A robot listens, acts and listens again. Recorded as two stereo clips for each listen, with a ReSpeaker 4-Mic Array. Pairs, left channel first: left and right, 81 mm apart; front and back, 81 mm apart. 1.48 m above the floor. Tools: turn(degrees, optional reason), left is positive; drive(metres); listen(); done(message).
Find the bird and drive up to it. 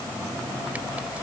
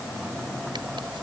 listen()
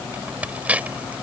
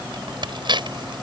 listen()
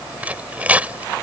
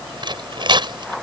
done("I can't make out a bird, only tearing paper.")